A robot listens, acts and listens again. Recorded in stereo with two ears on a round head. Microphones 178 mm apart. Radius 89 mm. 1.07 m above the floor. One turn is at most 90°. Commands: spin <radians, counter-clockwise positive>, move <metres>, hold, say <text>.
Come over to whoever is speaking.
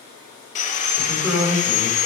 spin 0.52
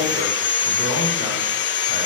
spin -0.52
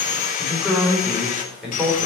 move 1.0
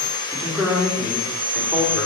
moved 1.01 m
move 1.0
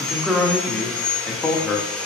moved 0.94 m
move 1.0
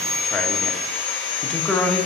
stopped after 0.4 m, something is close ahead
say Arrived at the man speaking, straight ahead.